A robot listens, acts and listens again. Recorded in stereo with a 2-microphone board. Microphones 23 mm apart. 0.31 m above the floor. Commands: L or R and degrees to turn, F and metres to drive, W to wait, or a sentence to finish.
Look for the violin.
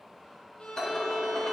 L50
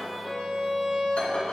Found it: a violin, straight ahead.